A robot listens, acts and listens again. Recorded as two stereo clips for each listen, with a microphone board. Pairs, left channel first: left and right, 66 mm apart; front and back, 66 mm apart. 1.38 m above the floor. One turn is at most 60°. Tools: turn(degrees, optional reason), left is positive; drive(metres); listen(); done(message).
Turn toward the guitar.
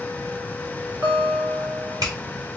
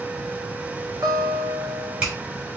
turn(degrees=-60, reason="The guitar: 145° right.")
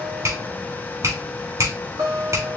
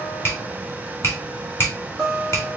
turn(degrees=-60, reason="The guitar is now 90° right.")
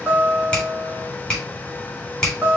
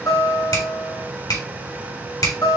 turn(degrees=-20, reason="The guitar is now 20° right.")
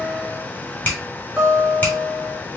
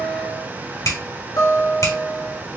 turn(degrees=-10, reason="The guitar is now 10° right.")
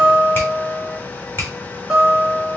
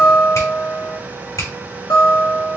done("Found it: a guitar, straight ahead, 2 to 4 m away.")